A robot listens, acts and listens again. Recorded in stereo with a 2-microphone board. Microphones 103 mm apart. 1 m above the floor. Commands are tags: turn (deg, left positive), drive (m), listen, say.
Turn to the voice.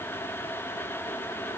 <listen/>
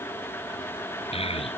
<turn deg="70"/>
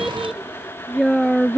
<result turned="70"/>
<say>Facing the child speaking.</say>